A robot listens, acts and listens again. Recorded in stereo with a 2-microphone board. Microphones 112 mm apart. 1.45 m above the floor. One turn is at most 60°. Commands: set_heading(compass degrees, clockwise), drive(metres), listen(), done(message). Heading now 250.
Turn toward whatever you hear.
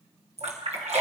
set_heading(310)
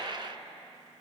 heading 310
listen()
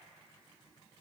done("I heard a splash, but can't make it out now. It was about 15° right or 45° right.")